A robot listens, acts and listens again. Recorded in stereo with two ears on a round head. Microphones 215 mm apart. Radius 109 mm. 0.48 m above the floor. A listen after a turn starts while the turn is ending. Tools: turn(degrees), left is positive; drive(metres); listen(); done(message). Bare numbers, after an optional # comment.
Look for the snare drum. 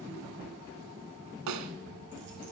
turn(-90)
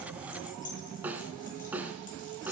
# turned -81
done("Found it: a snare drum, straight ahead, 1 to 2 m away.")